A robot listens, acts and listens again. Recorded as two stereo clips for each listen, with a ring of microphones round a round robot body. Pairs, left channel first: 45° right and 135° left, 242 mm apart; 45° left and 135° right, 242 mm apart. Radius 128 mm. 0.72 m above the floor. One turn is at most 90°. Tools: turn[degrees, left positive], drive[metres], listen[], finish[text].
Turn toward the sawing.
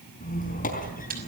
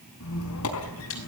Action: listen[]
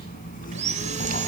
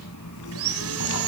Thought: The sawing: 160° right.
Action: turn[-90]
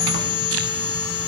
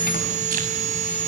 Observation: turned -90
Thought: The sawing is now 75° right.
Action: turn[-75]
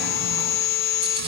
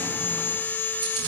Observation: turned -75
Thought: The sawing is now 35° right.
Action: turn[-35]
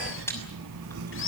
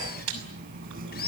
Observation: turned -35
Action: finish[Found it: sawing, straight ahead, 2 to 4 m away.]